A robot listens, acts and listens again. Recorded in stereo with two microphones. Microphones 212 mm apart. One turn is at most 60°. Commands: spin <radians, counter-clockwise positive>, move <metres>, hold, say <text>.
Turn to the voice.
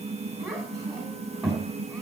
spin 0.52
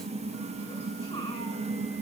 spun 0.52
hold
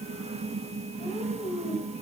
spin 1.05
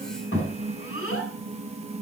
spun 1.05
spin 1.05
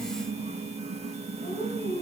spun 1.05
spin 0.61
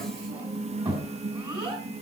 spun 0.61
spin -0.35
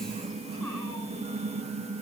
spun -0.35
hold
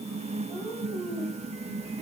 say Found it: a child speaking, straight ahead.